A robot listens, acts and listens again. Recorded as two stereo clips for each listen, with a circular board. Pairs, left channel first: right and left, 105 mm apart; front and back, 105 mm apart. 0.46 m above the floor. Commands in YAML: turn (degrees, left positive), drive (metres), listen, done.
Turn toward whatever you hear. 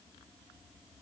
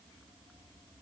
listen: true
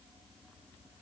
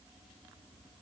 listen: true
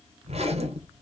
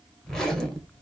turn: 85
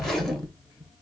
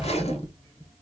done: "Found it: a zipper, straight ahead, 1 to 2 m away."